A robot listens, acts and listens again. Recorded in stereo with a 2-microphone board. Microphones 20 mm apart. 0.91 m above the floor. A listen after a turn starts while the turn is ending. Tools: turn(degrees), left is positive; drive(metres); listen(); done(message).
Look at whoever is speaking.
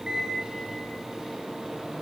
listen()
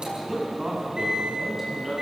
turn(degrees=-20)
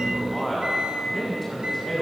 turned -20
done("Found it: a man speaking, straight ahead, over 4 m away.")